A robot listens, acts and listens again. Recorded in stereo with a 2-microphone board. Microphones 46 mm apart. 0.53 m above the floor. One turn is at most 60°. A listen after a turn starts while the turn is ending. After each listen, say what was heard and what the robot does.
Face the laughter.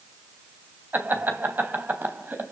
The laughter: about 40° right or 140° right. Turn 40° right.
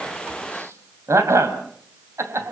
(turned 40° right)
So it is at 95° right. Turn 60° right.
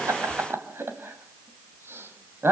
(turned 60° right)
The laughter is now 60° right. Turn 60° right.
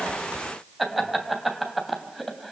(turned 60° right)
Facing the laughter, 2 to 4 m away.